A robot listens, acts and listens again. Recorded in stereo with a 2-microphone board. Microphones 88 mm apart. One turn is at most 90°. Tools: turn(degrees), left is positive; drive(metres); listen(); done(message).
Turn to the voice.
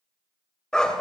listen()
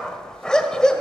listen()
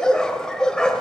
done("I can't make out anyone speaking, only a dog barking.")